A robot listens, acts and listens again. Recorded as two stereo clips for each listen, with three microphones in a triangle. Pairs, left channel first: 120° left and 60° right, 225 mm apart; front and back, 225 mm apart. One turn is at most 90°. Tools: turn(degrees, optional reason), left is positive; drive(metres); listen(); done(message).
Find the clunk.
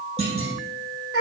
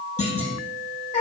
done("Facing the clunk, 2 to 4 m away.")